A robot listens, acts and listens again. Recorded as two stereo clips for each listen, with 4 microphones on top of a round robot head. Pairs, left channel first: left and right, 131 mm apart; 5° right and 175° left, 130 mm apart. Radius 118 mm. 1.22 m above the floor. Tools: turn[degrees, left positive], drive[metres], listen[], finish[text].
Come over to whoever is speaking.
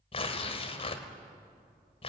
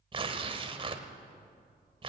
Action: listen[]
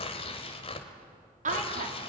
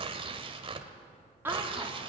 Thought: The woman speaking: 110° right.
Action: turn[-110]
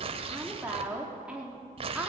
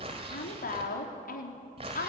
Thought: The woman speaking is now 10° right.
Action: turn[-10]
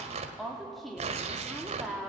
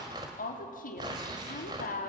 Action: drive[1.0]
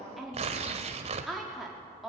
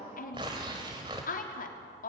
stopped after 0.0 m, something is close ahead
Action: finish[Something is in my way. I am facing the woman speaking but have not reached it.]